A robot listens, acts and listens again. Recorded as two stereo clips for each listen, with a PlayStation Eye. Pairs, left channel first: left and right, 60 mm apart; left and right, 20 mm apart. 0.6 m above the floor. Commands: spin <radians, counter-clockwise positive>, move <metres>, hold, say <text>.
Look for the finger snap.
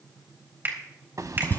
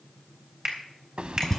spin -0.52
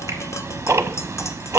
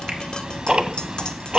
hold
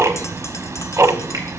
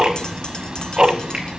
hold
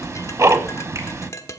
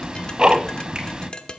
say I heard a finger snap, but can't make it out now. It was about straight ahead or 120° right.